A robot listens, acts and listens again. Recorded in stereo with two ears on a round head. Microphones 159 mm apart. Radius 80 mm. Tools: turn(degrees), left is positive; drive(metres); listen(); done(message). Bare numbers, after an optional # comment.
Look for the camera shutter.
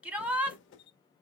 # The camera shutter: about 30° left or 150° left.
turn(30)
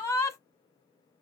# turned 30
listen()
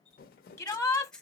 done("Facing the camera shutter.")